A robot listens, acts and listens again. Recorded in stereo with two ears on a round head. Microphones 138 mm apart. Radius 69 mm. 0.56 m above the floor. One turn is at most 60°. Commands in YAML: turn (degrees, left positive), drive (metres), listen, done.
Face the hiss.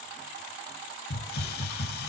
turn: 60
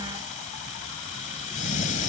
turn: 50
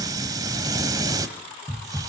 turn: -25
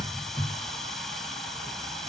done: "Facing the hiss, 1 to 2 m away."